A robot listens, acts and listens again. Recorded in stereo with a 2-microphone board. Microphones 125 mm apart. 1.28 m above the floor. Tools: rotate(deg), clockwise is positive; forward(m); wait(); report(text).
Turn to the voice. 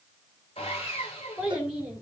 rotate(-30)
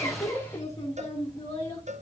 rotate(-150)
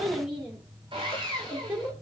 rotate(10)
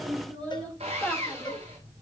report("Found it: a child speaking, straight ahead.")